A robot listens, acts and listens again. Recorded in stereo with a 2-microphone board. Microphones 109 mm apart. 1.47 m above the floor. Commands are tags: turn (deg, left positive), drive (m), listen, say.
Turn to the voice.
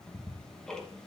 <listen/>
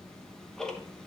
<listen/>
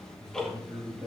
<turn deg="-40"/>
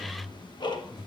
<say>Found it: a man speaking, straight ahead.</say>